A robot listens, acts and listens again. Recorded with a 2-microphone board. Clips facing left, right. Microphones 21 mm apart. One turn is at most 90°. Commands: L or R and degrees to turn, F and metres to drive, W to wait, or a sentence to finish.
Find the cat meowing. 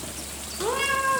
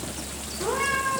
L90
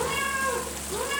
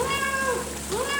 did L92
R25
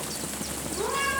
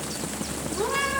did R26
R10
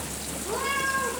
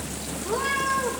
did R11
Facing the cat meowing, over 4 m away.